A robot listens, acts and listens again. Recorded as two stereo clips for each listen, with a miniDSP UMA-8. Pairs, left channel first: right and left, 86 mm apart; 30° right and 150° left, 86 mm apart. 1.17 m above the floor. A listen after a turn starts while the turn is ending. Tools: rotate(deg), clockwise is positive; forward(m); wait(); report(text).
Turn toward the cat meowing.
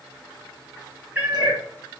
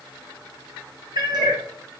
rotate(-155)
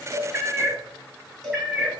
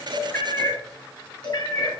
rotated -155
report("Found it: a cat meowing, straight ahead, 2 to 4 m away.")